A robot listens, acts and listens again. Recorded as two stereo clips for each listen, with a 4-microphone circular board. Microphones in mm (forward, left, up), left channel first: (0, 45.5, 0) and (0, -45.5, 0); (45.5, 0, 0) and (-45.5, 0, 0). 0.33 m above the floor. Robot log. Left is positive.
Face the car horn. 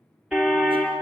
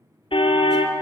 note: The car horn: 10° right.
cmd yaw -10
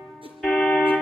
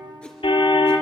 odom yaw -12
end: Facing the car horn.